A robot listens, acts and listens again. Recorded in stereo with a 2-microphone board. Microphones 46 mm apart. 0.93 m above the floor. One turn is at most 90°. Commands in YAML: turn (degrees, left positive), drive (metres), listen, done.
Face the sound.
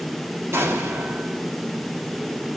turn: -90
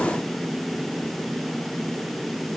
done: "I heard an explosion from this way, but can't make it out now."